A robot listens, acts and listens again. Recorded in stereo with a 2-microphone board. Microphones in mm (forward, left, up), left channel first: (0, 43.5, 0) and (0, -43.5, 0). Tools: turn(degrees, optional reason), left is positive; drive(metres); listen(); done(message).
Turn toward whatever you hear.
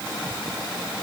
listen()
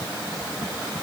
listen()
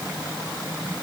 done("I can't make out anything to turn to.")